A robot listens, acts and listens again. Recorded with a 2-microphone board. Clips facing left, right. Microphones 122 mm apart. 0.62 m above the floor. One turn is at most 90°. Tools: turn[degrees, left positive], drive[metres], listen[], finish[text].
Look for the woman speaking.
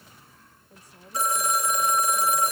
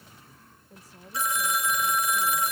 Action: turn[30]
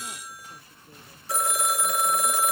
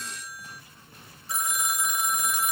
Action: listen[]
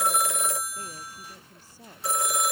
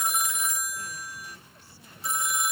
Action: listen[]
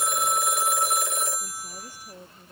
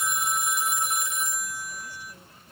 Thought: So it is at 135° left.
Action: turn[90]
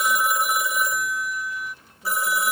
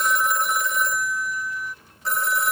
Thought: Nothing new. It was at 45° left.
Action: turn[45]
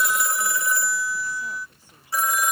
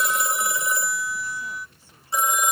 Action: listen[]
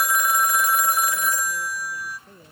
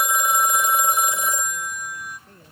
Thought: The woman speaking is now 15° left.
Action: turn[15]
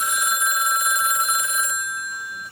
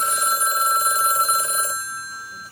Action: listen[]
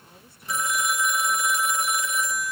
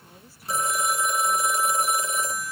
Action: listen[]
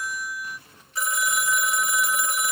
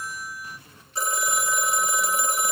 Action: finish[Facing where the woman speaking came from. I can't hear it now.]